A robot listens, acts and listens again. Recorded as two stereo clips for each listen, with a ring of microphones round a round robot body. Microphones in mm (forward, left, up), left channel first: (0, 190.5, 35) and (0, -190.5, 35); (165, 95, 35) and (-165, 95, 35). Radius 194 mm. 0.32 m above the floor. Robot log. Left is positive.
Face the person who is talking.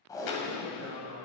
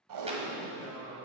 note: The man speaking: 35° right.
cmd yaw -35
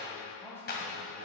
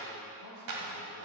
end: Facing the man speaking, 1 to 2 m away.